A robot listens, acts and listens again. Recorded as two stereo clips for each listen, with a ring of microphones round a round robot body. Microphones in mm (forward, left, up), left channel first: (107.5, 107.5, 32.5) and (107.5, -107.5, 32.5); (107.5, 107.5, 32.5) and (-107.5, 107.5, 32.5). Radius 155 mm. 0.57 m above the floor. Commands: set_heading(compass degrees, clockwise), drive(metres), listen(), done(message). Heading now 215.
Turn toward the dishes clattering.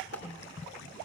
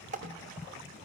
set_heading(90)
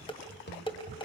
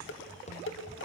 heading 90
set_heading(65)
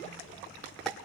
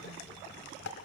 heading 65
listen()
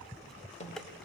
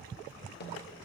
listen()
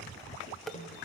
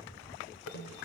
done("Facing the dishes clattering.")